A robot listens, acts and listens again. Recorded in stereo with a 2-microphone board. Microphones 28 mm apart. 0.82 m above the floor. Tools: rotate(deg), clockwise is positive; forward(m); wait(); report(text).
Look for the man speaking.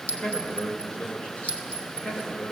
rotate(-50)
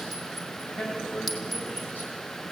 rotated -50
rotate(-80)
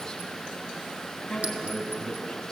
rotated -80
rotate(-10)
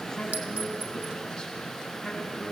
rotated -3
report("Found it: a man speaking, straight ahead.")